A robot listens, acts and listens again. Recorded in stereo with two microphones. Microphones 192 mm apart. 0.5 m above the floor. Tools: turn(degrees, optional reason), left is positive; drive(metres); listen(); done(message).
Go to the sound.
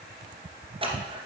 turn(degrees=-30, reason="The scissors: about 30° right or 150° right.")
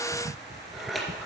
drive(metres=1.0)
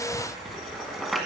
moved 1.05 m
drive(metres=1.0)
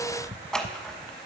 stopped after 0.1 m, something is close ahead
done("I am next to the scissors.")